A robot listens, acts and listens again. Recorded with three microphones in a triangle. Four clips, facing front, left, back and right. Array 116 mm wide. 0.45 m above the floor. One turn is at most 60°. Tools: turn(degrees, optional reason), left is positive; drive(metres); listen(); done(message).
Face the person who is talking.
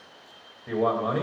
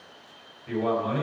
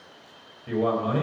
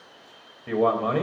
turn(degrees=-60, reason="The man speaking: 70° right.")
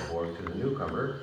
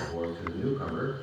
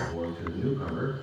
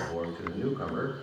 turn(degrees=-15, reason="The man speaking is now 15° right.")
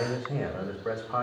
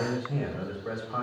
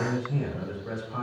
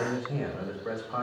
done("Facing the man speaking.")